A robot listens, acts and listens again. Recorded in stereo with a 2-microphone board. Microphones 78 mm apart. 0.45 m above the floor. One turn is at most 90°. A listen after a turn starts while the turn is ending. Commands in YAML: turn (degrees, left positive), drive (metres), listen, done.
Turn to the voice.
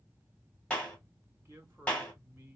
turn: -30
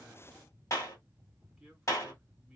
turn: -10
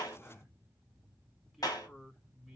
done: "Found it: a man speaking, straight ahead, 1 to 2 m away."